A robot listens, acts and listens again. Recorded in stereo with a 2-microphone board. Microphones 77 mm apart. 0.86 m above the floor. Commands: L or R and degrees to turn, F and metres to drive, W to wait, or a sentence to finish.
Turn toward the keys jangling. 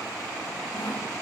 W
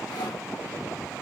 W
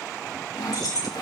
L60
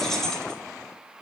Found it: keys jangling, straight ahead.